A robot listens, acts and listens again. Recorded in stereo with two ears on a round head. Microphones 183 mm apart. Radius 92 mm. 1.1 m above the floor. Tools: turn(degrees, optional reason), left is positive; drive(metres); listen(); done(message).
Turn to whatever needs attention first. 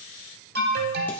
turn(degrees=-50, reason="The alarm: about 50° right or 130° right.")
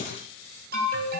turn(degrees=-60, reason="So it is at 60° right.")
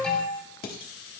done("Facing the alarm.")